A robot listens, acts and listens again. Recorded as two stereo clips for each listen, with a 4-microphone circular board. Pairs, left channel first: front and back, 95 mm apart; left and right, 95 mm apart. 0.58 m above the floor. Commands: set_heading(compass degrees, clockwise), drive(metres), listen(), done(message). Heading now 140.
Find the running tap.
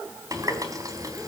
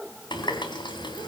set_heading(15)
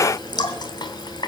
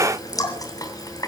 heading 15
set_heading(335)
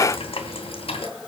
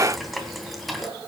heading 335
done("Facing the running tap.")